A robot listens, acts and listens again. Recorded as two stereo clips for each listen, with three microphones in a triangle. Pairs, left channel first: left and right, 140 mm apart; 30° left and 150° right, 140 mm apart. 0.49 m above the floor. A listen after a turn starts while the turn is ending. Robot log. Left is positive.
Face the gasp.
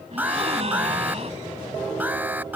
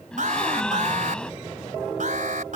note: The gasp: 55° right.
cmd yaw -55
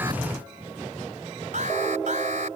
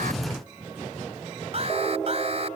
end: Facing where the gasp came from. I can't hear it now.